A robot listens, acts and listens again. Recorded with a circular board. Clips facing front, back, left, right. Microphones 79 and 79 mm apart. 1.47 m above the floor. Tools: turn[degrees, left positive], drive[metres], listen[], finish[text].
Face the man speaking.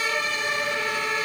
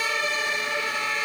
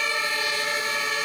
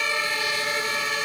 Action: listen[]
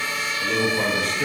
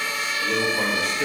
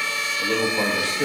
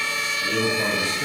Thought: The man speaking: 90° left.
Action: turn[90]
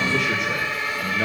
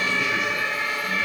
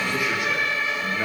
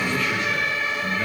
Thought: The man speaking is now 20° left.
Action: turn[20]
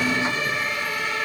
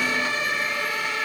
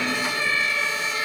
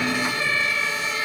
Action: listen[]
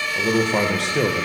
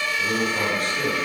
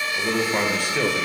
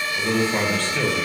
Thought: The man speaking is now 15° left.
Action: turn[15]
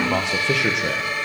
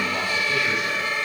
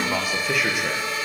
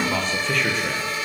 Thought: The man speaking is now 10° left.
Action: turn[10]
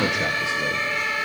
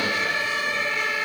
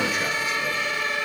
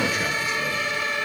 Action: listen[]
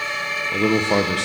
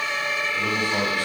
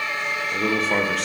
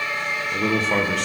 Action: finish[Found it: a man speaking, straight ahead, 1 to 2 m away.]